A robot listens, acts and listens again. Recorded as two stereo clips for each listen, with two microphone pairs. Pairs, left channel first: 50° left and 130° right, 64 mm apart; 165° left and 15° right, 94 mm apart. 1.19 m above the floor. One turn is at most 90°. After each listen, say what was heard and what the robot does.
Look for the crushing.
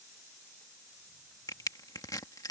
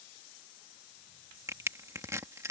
The crushing: 45° left. Turn 45° left.
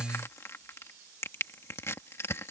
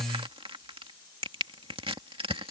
Facing the crushing.